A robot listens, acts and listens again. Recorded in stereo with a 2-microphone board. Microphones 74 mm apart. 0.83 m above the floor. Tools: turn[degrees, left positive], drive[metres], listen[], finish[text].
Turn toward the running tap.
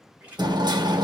Thought: The running tap: about 20° right or 160° right.
Action: turn[-20]
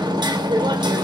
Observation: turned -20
Action: listen[]
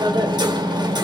Action: listen[]
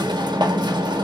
Action: finish[I heard a running tap, but can't make it out now. It was about straight ahead or 140° right.]